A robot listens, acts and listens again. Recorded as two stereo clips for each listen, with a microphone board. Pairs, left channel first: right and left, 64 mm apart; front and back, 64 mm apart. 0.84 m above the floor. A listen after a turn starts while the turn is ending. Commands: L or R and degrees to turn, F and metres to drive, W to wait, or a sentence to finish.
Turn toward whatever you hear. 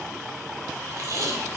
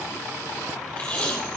L65
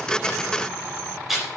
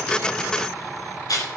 Facing the tape being pulled.